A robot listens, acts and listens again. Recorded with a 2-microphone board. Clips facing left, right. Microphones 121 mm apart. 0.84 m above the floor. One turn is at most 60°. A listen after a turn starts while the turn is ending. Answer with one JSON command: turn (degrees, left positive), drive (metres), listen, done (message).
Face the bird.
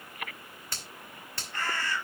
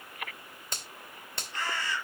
{"turn": 55}
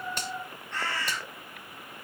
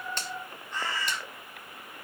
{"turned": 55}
{"turn": 60}
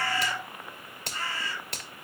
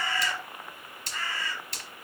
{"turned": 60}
{"turn": 35}
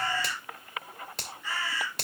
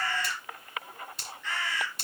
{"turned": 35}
{"turn": 10}
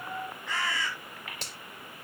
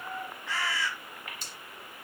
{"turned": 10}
{"done": "Found it: a bird, straight ahead."}